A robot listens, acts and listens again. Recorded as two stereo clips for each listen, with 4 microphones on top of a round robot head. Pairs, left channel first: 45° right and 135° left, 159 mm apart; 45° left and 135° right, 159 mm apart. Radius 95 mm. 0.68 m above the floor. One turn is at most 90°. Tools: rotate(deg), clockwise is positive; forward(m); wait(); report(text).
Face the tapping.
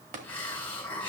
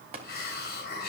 rotate(-90)
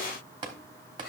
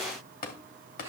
rotate(-75)
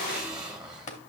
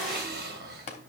report("Facing the tapping, 1 to 2 m away.")